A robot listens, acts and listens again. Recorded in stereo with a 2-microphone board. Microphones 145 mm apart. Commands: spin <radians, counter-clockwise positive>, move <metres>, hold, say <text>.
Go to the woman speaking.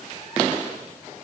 hold
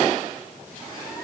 hold
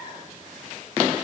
say I can't make out a woman speaking to turn to.